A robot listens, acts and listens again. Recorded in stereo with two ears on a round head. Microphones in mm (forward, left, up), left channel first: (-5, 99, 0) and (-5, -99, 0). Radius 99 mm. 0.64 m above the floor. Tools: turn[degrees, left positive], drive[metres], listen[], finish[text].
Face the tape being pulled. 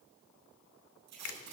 Action: turn[-90]
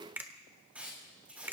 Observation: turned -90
Action: finish[Found it: tape being pulled, straight ahead, over 4 m away.]